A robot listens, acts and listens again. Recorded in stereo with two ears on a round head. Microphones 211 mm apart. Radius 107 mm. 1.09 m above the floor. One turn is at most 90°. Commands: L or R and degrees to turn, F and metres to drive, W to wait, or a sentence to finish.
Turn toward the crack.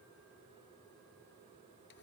W
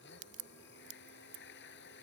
R70
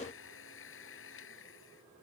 W
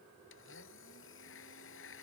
I heard a crack, but can't make it out now. It was about straight ahead or 40° right.